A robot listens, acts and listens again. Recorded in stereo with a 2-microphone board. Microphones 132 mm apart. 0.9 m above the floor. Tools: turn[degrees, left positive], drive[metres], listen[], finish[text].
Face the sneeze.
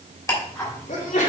Action: turn[90]
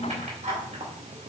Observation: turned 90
Action: finish[Facing where the sneeze came from. I can't hear it now.]